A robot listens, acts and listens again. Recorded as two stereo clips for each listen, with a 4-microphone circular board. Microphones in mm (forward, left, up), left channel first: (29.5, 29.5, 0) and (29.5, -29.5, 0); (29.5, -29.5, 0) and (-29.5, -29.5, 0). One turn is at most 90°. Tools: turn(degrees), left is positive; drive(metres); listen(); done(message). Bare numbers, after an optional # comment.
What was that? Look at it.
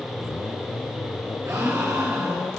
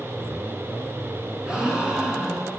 # The gasp: 105° right.
turn(-90)
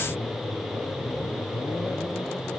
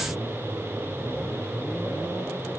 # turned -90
# Nothing new. It was at 15° right.
turn(-15)
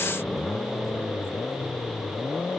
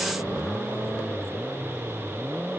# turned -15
done("I heard a gasp from this way, but can't make it out now.")